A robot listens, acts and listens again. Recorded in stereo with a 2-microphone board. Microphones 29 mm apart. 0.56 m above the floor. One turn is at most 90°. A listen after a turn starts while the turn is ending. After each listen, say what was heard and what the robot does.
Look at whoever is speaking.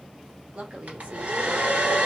The woman speaking: about 50° right or 130° right. Turn 50° right.
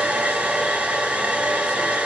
Keep listening.
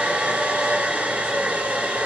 Keep listening.
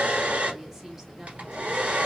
So it is at 15° right. Turn 15° right.
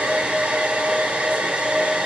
Keep listening.
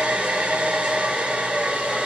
Keep listening.
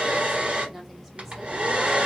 Facing where the woman speaking came from. I can't hear it now.